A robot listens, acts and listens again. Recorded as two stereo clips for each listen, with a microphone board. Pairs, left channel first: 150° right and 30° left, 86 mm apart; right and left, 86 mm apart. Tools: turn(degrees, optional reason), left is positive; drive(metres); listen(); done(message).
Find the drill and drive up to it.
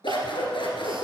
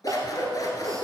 listen()
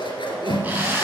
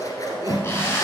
turn(degrees=-35, reason="The drill: 35° right.")
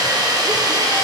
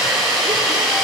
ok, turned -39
drive(metres=1.0)
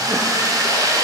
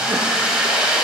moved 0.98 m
turn(degrees=15, reason="The drill is now 15° left.")
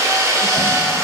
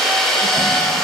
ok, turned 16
drive(metres=1.0)
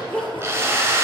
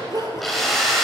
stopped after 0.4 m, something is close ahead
done("Arrived at the drill, straight ahead.")